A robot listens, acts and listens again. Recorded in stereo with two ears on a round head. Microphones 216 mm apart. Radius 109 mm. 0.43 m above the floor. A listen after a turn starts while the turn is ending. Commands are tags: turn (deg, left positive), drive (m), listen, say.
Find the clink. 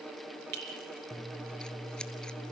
<turn deg="-90"/>
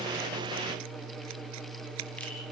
<listen/>
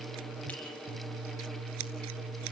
<listen/>
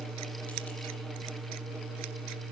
<say>Facing where the clink came from. I can't hear it now.</say>